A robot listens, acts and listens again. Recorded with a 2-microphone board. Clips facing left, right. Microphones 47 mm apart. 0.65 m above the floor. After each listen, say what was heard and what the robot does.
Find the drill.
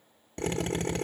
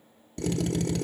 The drill: about 35° left or 145° left. Turn 35° left.
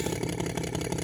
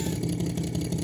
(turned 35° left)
So it is at 100° left. Turn 100° left.
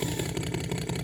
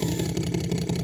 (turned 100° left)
The drill is now 20° left. Turn 20° left.
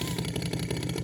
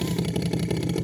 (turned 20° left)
Found it: a drill, straight ahead, under 1 m away.